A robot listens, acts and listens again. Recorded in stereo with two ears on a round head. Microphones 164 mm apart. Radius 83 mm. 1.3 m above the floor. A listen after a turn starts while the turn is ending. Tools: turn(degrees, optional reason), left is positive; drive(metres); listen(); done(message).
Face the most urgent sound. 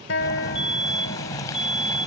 turn(degrees=-30)
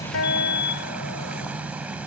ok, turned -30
turn(degrees=25, reason="So it is at 25° left.")
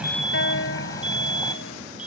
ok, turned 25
done("Facing the fire alarm.")